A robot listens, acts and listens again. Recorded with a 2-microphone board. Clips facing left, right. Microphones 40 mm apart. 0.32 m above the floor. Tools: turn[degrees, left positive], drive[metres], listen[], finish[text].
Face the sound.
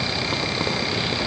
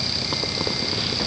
Action: listen[]
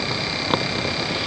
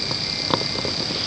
Action: listen[]
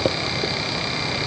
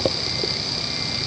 Action: finish[I can't make out anything to turn to.]